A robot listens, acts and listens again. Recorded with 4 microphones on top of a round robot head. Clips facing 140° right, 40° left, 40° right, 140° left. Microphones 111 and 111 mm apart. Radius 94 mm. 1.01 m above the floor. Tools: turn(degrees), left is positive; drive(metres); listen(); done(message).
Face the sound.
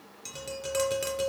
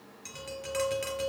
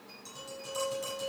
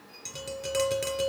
turn(degrees=160)
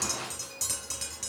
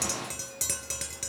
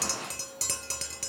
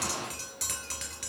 turn(degrees=15)
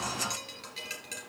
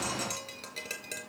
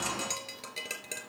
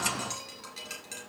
done("Found it: tapping, straight ahead, 2 to 4 m away.")